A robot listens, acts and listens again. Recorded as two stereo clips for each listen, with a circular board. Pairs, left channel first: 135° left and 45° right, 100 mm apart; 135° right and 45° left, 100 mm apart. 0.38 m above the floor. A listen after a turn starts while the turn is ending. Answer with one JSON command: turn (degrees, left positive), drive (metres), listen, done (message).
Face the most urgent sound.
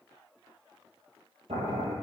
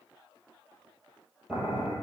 {"listen": true}
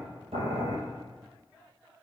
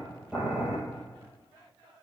{"listen": true}
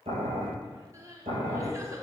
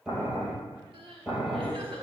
{"turn": 15}
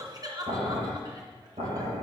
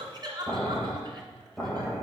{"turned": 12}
{"done": "Facing the crying, 2 to 4 m away."}